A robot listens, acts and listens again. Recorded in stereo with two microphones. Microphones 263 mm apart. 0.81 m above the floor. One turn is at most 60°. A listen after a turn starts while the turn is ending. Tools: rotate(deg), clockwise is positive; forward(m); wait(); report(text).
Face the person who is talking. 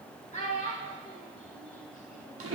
rotate(-25)
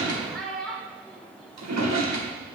report("Facing the child speaking.")